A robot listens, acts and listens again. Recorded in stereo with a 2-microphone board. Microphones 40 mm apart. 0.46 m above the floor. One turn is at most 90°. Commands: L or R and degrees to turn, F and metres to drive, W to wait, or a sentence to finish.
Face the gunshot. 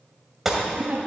R30
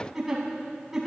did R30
W
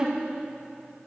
I heard a gunshot, but can't make it out now. It was about 25° left or 145° right.